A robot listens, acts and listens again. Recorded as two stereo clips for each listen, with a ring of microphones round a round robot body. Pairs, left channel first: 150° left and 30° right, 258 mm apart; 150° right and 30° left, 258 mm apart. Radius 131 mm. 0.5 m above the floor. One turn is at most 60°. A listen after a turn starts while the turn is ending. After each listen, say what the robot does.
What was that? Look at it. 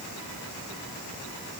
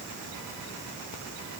Keep listening.
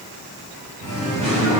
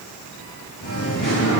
Turn 60° right.
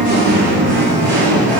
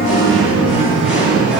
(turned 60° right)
Turn 55° right.
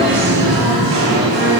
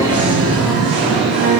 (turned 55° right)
Facing the singing.